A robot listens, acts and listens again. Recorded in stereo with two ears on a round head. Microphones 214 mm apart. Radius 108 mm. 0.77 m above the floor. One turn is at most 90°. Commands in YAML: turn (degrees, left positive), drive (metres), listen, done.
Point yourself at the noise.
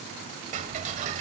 turn: -35
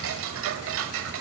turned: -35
turn: -90
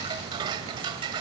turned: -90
turn: -20
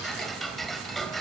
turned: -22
done: "Facing the ticking, 1 to 2 m away."